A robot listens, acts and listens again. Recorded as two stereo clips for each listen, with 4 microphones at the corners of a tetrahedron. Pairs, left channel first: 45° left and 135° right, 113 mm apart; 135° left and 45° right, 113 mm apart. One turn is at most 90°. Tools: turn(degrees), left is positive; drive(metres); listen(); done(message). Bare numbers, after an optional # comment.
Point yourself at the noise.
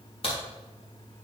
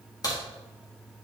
# The crack: 80° left.
turn(80)
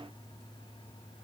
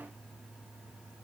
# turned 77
done("Facing where the crack came from. I can't hear it now.")